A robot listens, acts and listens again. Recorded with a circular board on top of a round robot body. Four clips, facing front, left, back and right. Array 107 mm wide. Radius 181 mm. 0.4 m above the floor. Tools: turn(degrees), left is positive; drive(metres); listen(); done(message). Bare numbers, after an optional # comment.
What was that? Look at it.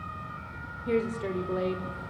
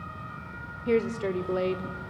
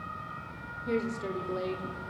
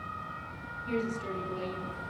# The woman speaking: 80° left.
turn(80)
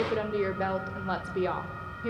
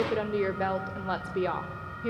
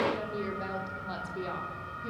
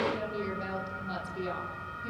# The woman speaking is now 55° left.
turn(55)
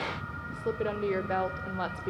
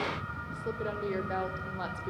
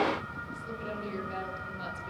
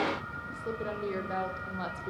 done("Found it: a woman speaking, straight ahead.")